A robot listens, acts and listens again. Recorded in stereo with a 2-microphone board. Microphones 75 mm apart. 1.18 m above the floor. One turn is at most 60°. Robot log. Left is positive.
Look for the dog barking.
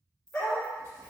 note: The dog barking: about 15° left or 165° left.
cmd yaw +15
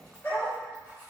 note: So it is at 150° left.
cmd yaw +60
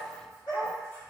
note: The dog barking is now 85° left.
cmd yaw +60
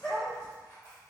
note: The dog barking is now 40° left.
cmd yaw +40
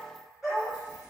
end: Facing the dog barking, 1 to 2 m away.